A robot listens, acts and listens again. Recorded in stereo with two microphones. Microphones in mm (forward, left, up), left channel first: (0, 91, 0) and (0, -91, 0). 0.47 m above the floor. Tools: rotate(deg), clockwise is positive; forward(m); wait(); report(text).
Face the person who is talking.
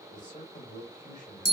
rotate(-45)
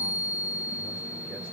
wait()
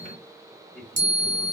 report("Facing the man speaking.")